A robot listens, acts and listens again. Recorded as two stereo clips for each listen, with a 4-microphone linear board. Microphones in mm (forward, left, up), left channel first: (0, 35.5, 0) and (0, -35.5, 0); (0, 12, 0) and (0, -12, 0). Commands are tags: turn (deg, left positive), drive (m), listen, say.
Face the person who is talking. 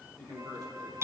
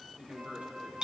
<turn deg="-90"/>
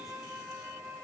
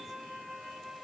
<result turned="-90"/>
<listen/>
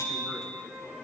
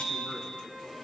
<listen/>
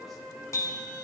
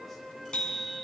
<say>Facing where the man speaking came from. I can't hear it now.</say>